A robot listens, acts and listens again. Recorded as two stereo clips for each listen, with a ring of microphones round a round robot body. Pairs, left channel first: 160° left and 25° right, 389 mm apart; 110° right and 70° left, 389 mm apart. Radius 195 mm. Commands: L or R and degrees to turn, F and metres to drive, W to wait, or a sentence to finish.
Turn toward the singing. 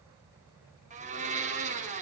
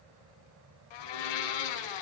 W
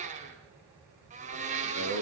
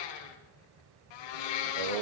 L40
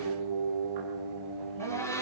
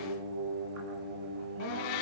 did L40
L15
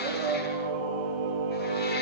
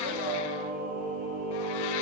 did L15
Found it: singing, straight ahead, over 4 m away.